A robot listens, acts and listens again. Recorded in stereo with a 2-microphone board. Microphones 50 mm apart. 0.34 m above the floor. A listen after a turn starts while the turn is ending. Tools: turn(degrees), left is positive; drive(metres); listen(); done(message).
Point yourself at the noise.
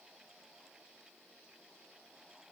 listen()
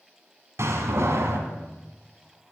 turn(degrees=-65)
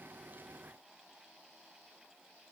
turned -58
listen()
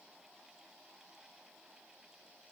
done("I heard a door slam, but can't make it out now. It was about 10° right or 55° right.")